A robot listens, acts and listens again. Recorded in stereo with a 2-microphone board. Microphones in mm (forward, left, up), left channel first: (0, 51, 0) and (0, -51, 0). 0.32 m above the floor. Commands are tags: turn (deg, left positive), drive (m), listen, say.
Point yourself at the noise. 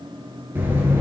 <turn deg="-20"/>
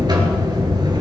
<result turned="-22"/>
<turn deg="-140"/>
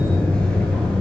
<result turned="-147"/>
<turn deg="10"/>
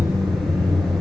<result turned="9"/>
<say>Found it: a buzzer, straight ahead.</say>